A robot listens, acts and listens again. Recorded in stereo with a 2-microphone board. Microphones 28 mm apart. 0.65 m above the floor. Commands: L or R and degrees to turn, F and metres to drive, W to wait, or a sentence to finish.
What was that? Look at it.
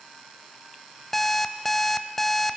L30
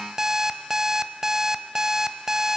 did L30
R20
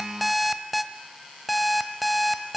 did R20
Facing the alarm clock.